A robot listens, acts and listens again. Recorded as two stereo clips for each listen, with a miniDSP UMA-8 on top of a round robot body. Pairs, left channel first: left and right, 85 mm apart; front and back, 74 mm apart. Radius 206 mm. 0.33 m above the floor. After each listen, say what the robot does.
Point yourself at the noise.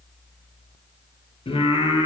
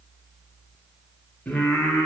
Turn 85° left.
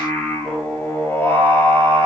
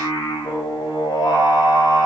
Turn 30° left.
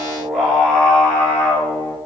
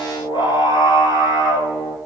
Turn 10° left.
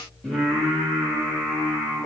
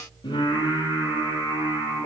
Found it: singing, straight ahead, 2 to 4 m away.